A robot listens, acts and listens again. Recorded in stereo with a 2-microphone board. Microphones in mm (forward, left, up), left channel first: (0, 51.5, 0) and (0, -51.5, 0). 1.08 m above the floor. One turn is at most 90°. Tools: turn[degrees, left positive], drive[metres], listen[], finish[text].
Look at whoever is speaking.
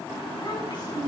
Thought: The child speaking: about 45° left or 135° left.
Action: turn[45]
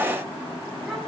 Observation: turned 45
Action: listen[]
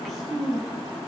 Action: finish[Found it: a child speaking, straight ahead, over 4 m away.]